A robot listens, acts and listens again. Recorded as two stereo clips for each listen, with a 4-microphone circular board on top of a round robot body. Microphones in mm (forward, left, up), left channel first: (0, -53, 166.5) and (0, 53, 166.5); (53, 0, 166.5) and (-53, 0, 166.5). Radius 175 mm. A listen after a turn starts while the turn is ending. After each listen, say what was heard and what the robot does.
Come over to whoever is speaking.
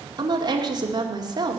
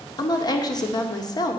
The woman speaking: 45° left. Turn 45° left.
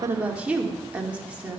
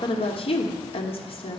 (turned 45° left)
The woman speaking is now 10° left. Turn 10° left.
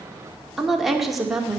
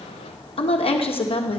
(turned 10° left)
Drive 1.0 m forward.
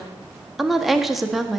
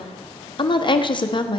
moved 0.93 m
Drive 1.0 m forward.
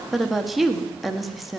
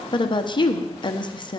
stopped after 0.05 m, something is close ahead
I am next to the woman speaking.